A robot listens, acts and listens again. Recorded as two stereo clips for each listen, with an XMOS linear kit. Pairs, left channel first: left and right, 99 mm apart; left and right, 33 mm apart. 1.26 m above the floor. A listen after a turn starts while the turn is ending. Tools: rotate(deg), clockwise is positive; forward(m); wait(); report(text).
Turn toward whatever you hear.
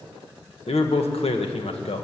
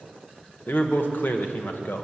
rotate(-75)
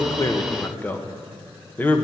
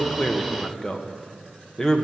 rotate(-20)
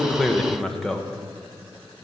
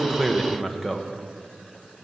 report("Found it: a man speaking, straight ahead.")